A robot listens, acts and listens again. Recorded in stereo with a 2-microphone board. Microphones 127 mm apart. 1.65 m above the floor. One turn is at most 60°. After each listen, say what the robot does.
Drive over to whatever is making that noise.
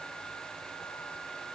Keep listening.
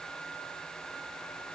Keep listening.
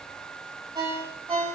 Turn 35° right.
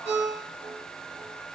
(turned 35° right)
Turn 60° right.
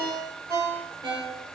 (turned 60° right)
Turn 40° right.
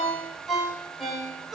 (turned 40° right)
Drive 1.0 m forward.
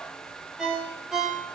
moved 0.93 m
Drive 1.0 m forward.
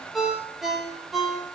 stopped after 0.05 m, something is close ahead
I am next to the ringtone.